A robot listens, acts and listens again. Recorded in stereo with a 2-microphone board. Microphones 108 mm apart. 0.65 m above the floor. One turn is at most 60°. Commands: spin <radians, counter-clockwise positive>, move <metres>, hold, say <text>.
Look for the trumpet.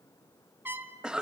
spin -0.35
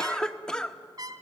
spin -1.05
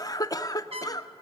spin -1.05
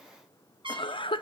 spin -0.96
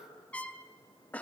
spin 0.26
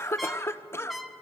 say Found it: a trumpet, straight ahead.